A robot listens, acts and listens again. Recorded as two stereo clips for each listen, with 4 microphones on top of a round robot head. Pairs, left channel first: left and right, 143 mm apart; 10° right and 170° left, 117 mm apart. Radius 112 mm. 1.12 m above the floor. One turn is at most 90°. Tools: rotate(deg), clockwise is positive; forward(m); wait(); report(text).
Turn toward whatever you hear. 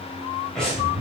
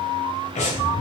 report("Facing the breathing, 2 to 4 m away.")